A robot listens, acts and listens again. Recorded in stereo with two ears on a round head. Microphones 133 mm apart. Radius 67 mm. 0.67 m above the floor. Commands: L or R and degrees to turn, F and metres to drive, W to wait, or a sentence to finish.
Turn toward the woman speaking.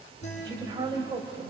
R25
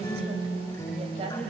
R40
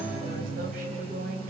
R115
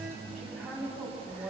Facing the woman speaking, over 4 m away.